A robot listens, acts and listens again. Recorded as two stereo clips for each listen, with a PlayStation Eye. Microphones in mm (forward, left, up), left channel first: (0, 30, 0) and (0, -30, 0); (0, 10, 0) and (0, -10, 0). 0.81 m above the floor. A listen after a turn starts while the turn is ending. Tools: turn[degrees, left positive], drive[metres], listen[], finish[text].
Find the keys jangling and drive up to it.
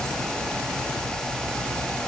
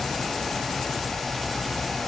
Action: listen[]
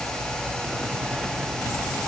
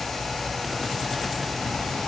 Action: listen[]
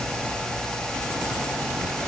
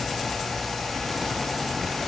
Action: finish[I can't make out keys jangling to turn to.]